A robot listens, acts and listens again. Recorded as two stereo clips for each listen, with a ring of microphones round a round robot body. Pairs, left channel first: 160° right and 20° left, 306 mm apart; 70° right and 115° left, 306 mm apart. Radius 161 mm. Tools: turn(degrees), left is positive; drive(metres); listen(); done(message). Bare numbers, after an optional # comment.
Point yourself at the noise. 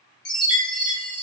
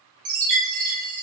# The chime: 145° left.
turn(145)
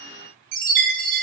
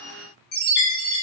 done("Facing the chime.")